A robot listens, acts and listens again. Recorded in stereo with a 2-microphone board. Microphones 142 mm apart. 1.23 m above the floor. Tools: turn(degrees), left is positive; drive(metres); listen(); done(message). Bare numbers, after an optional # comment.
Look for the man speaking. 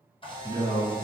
# The man speaking: about 70° left or 110° left.
turn(70)
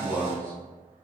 # So it is at 15° left.
turn(15)
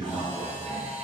done("Facing the man speaking, 1 to 2 m away.")